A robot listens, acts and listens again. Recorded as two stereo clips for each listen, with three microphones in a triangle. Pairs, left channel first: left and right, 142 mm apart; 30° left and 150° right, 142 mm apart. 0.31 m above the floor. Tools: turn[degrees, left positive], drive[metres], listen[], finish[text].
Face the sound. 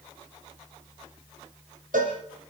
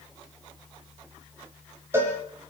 Thought: The cowbell: 80° right.
Action: turn[-80]
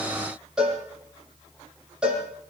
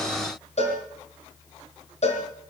Action: finish[Facing the cowbell, over 4 m away.]